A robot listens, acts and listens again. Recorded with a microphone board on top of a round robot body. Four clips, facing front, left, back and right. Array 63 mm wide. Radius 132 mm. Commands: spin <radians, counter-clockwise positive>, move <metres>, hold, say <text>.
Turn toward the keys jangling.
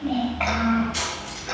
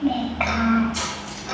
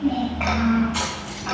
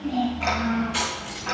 spin -1.57
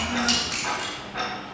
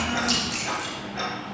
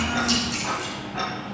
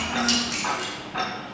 spin -0.61
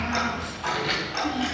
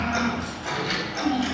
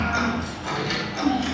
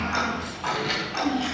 spin -0.26
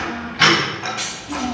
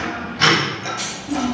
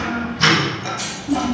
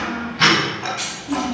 spin -0.17
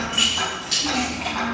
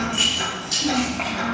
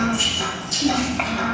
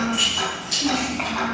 say Facing the keys jangling, over 4 m away.